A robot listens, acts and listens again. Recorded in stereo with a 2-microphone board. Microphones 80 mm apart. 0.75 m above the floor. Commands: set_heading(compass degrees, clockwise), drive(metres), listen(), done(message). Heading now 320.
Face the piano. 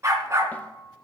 set_heading(230)
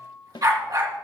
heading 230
set_heading(220)
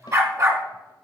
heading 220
listen()
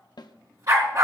listen()
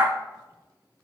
done("I heard a piano from this way, but can't make it out now.")